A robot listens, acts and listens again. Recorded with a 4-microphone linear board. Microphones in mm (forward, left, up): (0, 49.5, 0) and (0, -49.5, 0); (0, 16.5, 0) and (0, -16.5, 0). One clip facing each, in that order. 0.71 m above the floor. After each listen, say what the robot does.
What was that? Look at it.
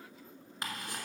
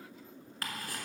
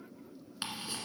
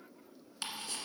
Turn 20° left.
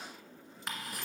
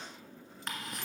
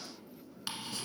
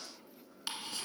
Found it: ticking, straight ahead, 1 to 2 m away.